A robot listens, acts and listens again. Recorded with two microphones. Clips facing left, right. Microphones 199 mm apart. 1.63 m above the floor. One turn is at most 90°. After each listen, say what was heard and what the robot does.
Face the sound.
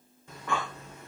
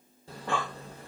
The breathing: about 35° right or 145° right. Turn 35° right.
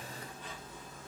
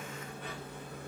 So it is at 110° right. Turn 90° right.
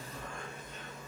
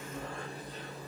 The breathing is now 35° right. Turn 35° right.
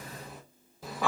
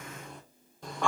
Facing the breathing, under 1 m away.